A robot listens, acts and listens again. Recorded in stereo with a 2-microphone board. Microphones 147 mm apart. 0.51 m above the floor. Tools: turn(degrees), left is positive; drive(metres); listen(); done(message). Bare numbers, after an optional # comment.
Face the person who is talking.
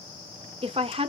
# The woman speaking: about 40° right or 140° right.
turn(-40)
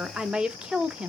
done("Facing the woman speaking.")